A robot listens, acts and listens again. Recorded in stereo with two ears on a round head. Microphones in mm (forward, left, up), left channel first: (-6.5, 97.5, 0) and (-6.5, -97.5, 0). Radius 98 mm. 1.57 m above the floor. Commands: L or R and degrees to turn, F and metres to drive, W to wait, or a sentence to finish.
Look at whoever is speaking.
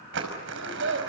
R60
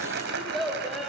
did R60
Facing the child speaking, over 4 m away.